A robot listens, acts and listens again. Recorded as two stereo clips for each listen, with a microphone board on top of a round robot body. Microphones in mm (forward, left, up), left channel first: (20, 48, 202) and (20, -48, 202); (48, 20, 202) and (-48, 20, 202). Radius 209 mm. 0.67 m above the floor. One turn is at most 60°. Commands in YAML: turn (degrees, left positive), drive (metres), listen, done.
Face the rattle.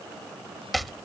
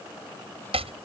listen: true
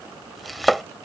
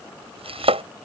listen: true
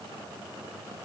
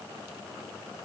done: "I can't make out a rattle, only chopping."